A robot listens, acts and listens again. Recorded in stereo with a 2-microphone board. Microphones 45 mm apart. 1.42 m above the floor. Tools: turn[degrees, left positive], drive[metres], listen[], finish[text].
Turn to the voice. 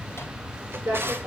Thought: The woman speaking: about 55° right or 125° right.
Action: turn[-55]
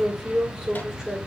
Action: finish[Facing the woman speaking.]